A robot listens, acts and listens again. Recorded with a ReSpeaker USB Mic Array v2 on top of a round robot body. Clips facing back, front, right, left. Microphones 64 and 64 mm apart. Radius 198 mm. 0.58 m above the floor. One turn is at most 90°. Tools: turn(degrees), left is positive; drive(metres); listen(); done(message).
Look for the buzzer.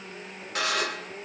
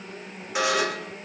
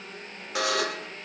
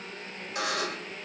turn(degrees=-80)
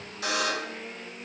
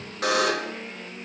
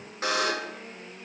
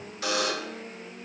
turn(degrees=-35)
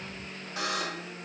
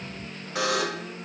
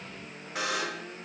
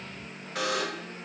done("Found it: a buzzer, straight ahead.")